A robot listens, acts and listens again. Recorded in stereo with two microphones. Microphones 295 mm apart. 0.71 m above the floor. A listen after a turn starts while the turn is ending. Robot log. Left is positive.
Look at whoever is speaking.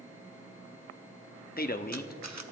note: The man speaking: about 30° left or 150° left.
cmd yaw +30
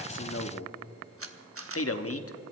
note: So it is at 110° left.
cmd yaw +110
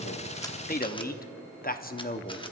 note: The man speaking is now 35° left.
cmd yaw +35
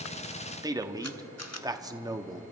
note: The man speaking is now 15° right.
cmd yaw -15
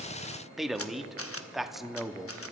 end: Facing the man speaking.